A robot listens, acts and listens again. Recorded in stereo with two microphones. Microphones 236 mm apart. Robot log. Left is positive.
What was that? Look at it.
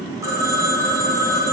cmd yaw -30
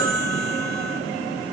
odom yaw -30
note: So it is at 15° left.
cmd yaw +15
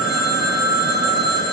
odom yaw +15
end: Facing the phone ringing.